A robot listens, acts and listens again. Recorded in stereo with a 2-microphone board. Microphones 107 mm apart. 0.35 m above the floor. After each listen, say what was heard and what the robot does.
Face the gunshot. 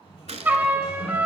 Turn 90° right.
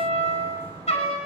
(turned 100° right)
Nothing new. It was at 10° left. Turn 10° left.
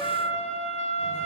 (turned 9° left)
I heard a gunshot from this way, but can't make it out now.